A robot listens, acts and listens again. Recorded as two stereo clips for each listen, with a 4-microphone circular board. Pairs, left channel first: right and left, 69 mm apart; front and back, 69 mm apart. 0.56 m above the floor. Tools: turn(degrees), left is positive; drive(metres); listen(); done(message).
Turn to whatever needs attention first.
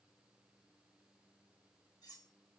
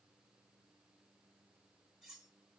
listen()
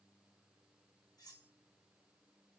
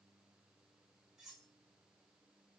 listen()
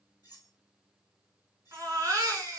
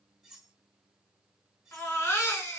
turn(degrees=50)
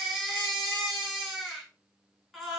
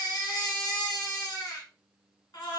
done("Facing the baby crying, 1 to 2 m away.")